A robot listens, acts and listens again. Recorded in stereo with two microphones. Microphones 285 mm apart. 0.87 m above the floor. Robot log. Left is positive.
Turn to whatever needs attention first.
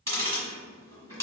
cmd idle
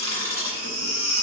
note: The baby crying: about 60° right or 120° right.
cmd yaw -60
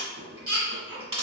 note: So it is at 55° right.
cmd yaw -55
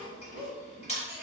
cmd idle
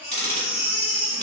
end: Facing the baby crying.